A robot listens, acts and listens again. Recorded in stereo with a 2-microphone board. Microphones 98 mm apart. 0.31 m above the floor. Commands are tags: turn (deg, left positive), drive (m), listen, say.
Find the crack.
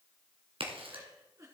<turn deg="-70"/>
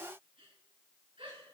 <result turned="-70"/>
<listen/>
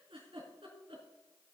<say>I heard a crack, but can't make it out now. It was about straight ahead or 40° right.</say>